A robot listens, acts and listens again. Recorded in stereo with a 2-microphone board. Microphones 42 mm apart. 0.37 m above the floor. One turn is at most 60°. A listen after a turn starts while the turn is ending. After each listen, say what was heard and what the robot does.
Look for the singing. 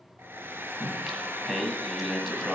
Turn 30° left.
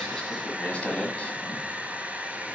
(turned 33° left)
So it is at 150° left. Turn 60° left.
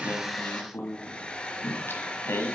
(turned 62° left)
The singing is now 90° left. Turn 60° left.
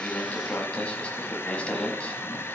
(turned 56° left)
The singing is now 30° left. Turn 30° left.
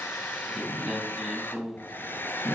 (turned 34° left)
Found it: singing, straight ahead.